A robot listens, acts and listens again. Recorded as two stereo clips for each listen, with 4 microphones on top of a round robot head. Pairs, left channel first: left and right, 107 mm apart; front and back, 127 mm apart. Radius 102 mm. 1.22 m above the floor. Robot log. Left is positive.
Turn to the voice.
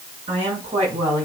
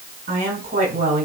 note: The woman speaking: 150° right.
cmd yaw -150
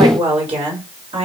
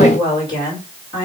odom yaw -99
note: The woman speaking is now 65° right.
cmd yaw -65
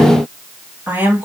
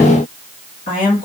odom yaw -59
note: The woman speaking is now 20° right.
cmd yaw -20
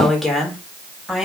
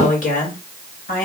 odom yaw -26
end: Found it: a woman speaking, straight ahead.